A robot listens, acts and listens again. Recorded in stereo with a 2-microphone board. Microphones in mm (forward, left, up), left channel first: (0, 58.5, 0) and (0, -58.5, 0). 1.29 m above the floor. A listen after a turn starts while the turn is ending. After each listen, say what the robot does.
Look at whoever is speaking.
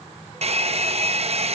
Keep listening.
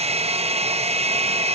Keep listening.
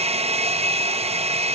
I can't make out anyone speaking, only a hair dryer.